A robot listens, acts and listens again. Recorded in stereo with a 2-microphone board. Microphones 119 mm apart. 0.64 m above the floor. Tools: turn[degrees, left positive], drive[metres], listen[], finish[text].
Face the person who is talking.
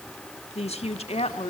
Thought: The woman speaking: about 60° left or 120° left.
Action: turn[60]
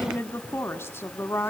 Thought: So it is at 20° left.
Action: turn[20]
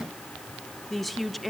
Action: finish[Facing the woman speaking.]